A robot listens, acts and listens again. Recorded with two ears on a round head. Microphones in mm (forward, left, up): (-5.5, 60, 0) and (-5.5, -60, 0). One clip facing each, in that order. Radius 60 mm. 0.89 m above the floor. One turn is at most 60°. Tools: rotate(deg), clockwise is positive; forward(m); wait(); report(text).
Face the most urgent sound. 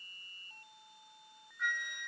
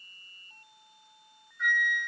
wait()
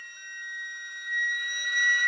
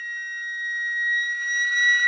wait()
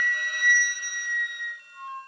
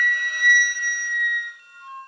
report("I can't make out anything urgent to turn to.")